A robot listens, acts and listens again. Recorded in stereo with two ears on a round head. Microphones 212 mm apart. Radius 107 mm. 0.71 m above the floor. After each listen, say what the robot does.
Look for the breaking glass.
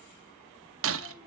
Turn 65° right.
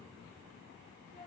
Keep listening.
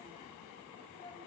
I heard breaking glass, but can't make it out now. It was about straight ahead or 50° right.